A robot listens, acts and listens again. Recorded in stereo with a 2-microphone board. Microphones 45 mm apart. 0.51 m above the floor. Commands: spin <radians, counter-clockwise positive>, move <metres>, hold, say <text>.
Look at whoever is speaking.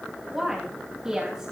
spin -0.52
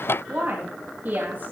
spin -2.36
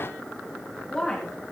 spin 0.26
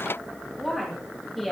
say Found it: a woman speaking, straight ahead, 2 to 4 m away.